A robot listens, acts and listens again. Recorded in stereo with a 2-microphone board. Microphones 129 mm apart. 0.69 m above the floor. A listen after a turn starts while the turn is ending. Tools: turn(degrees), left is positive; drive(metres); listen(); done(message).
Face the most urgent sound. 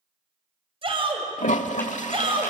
turn(degrees=-45)
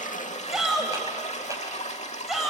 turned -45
done("Facing the shout.")